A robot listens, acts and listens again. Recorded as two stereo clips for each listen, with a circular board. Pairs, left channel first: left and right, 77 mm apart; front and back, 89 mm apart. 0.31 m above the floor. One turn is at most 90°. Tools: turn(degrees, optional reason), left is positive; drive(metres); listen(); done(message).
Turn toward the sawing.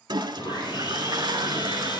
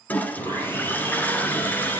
turn(degrees=65, reason="The sawing: 65° left.")
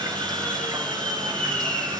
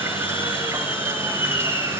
turn(degrees=15, reason="The sawing is now 15° left.")
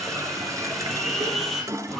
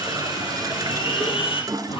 done("Found it: sawing, straight ahead, 2 to 4 m away.")